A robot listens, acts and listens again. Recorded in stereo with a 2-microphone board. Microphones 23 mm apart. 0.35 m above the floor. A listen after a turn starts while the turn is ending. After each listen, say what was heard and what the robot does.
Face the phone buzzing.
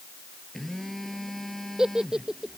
The phone buzzing: about 20° left or 160° left. Turn 20° left.
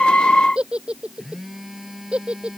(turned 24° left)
Found it: a phone buzzing, straight ahead.